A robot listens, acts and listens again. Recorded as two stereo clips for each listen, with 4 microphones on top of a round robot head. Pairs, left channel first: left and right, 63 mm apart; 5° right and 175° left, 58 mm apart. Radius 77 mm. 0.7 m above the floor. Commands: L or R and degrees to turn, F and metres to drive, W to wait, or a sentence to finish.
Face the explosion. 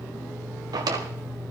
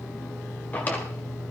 W
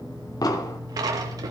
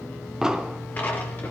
L95
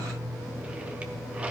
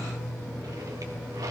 Facing where the explosion came from. I can't hear it now.